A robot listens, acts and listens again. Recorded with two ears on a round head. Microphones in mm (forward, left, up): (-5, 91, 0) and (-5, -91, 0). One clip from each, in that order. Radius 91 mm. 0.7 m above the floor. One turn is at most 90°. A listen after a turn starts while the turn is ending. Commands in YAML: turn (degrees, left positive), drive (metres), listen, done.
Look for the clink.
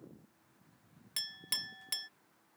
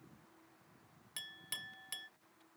turn: 25
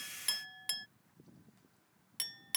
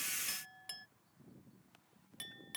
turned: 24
turn: 90
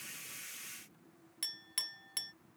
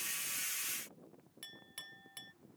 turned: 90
turn: 40
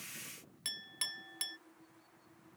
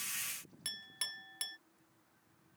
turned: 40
done: "Facing the clink."